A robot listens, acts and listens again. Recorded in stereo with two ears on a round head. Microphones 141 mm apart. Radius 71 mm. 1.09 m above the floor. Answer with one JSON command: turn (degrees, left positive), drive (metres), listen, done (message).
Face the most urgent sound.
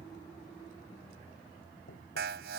{"turn": -90}
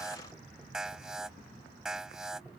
{"done": "Found it: an alarm, straight ahead."}